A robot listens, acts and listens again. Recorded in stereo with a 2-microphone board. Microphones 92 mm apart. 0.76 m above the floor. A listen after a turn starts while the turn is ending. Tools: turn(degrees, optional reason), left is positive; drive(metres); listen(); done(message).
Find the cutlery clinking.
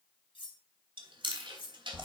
turn(degrees=65, reason="The cutlery clinking: about 65° left or 115° left.")
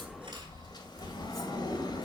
listen()
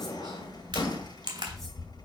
listen()
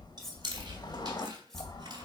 done("I heard cutlery clinking, but can't make it out now. It was about straight ahead or 50° left.")